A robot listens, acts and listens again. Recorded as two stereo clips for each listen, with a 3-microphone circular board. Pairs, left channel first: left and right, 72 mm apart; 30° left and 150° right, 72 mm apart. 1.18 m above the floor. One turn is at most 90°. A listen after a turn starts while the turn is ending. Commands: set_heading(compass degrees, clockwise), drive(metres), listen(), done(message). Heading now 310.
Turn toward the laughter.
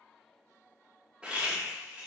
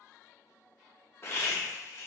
set_heading(325)
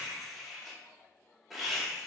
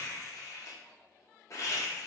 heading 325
done("Found it: laughter, straight ahead, under 1 m away.")